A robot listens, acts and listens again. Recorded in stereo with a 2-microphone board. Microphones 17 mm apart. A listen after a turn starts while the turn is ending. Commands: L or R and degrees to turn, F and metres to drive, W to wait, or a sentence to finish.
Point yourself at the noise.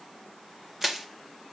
R25
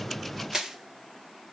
R130
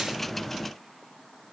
W
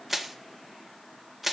Found it: crushing, straight ahead.